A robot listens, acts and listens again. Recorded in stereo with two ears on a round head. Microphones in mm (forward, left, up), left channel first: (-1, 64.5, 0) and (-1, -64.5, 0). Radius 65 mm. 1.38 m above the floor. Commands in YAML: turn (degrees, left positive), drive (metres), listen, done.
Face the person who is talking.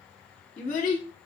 turn: 50
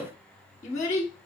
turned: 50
turn: 65
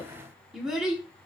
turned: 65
done: "Found it: a child speaking, straight ahead."